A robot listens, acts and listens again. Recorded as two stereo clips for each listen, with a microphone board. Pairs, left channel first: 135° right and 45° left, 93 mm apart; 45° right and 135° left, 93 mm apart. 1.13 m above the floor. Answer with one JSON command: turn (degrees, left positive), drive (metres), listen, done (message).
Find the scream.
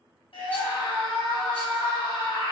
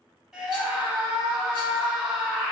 {"turn": -140}
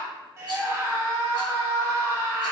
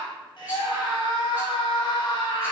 {"turn": -15}
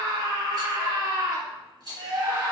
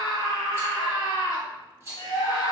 {"done": "Facing the scream."}